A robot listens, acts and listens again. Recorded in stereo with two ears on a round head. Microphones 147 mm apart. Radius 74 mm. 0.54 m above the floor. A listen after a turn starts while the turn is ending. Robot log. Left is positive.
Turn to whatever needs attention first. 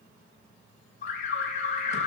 note: The alarm: about 45° left or 135° left.
cmd yaw +45
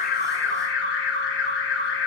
note: So it is at 85° left.
cmd yaw +85
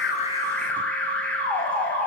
note: The alarm is now 10° left.
cmd yaw +10
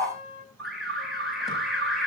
end: Facing the alarm.